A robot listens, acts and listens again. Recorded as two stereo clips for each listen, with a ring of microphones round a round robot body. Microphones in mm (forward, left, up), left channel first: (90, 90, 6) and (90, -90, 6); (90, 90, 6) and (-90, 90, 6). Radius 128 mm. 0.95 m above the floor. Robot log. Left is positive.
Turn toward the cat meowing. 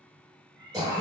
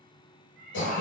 note: The cat meowing: 95° right.
cmd yaw -95
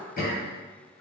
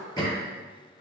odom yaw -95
cmd idle
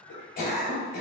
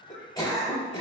cmd idle
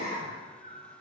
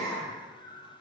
note: The cat meowing is now 50° left.
cmd yaw +50
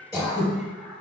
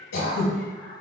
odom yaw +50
end: Found it: a cat meowing, straight ahead.